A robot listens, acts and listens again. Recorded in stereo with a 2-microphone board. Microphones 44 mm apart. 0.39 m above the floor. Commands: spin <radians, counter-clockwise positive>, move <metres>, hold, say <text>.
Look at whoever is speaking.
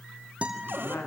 spin 0.87
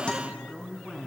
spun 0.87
say Facing the woman speaking.